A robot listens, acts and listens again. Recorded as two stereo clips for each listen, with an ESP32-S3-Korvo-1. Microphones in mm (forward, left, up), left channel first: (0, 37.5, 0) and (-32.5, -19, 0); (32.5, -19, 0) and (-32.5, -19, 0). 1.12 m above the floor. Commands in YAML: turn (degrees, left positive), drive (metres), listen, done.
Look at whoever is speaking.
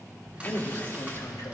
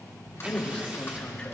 turn: 75
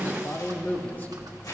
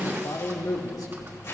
done: "Found it: a man speaking, straight ahead."